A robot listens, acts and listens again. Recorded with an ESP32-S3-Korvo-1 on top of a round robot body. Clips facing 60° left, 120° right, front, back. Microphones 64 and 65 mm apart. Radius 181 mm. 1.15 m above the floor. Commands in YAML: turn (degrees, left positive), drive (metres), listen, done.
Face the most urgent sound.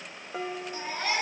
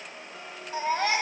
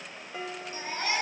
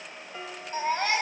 turn: -130
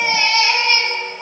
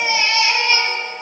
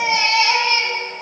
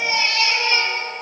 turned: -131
done: "Found it: a baby crying, straight ahead, over 4 m away."